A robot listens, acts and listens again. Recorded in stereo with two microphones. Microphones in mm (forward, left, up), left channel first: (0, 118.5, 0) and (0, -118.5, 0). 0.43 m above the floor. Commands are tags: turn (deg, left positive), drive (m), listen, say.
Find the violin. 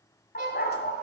<turn deg="-45"/>
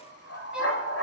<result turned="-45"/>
<listen/>
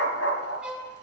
<say>Found it: a violin, straight ahead.</say>